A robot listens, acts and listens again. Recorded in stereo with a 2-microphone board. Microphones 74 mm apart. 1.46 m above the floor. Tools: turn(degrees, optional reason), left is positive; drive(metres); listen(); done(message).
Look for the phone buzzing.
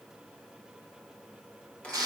listen()
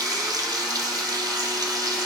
listen()
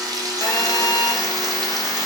turn(degrees=60, reason="The phone buzzing: about 60° left or 120° left.")
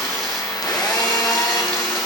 turn(degrees=60, reason="So it is at 60° left.")
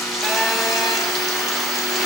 done("Facing the phone buzzing, under 1 m away.")